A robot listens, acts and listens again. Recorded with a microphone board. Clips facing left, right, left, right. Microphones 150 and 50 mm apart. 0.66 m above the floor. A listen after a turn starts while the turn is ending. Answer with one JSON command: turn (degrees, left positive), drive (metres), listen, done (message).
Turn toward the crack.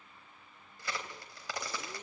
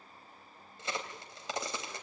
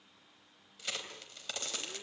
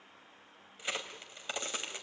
{"turn": -20}
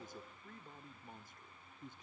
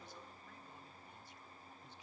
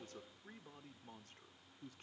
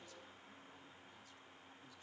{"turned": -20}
{"listen": true}
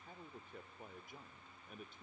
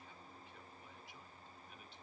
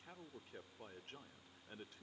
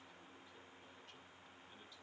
{"done": "I heard a crack, but can't make it out now. It was about straight ahead or 140° right."}